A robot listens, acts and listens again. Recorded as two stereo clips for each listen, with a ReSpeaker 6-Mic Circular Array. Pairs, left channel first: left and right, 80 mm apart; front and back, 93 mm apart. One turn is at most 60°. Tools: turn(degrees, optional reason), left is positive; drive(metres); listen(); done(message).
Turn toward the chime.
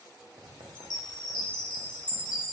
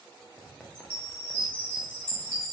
turn(degrees=60, reason="The chime: 110° left.")
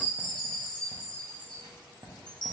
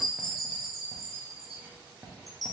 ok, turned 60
turn(degrees=60, reason="The chime is now 90° left.")
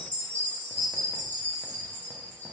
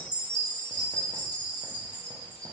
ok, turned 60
turn(degrees=20, reason="The chime is now 20° left.")
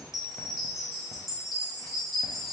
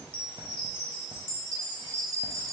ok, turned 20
done("Facing the chime, 1 to 2 m away.")